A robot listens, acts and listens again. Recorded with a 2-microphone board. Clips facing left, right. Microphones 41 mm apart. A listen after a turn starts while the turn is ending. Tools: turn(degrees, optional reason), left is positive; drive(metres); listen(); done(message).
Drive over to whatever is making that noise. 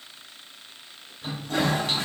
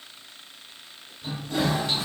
turn(degrees=55, reason="The toilet flushing: about 55° left or 125° left.")
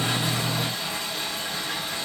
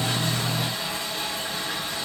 drive(metres=1.0)
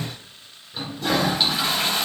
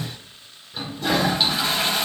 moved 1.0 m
drive(metres=1.0)
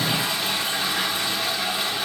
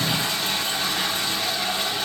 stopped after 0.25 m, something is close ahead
turn(degrees=10, reason="The toilet flushing is now 10° left.")
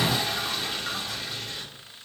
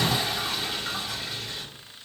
done("I am next to the toilet flushing.")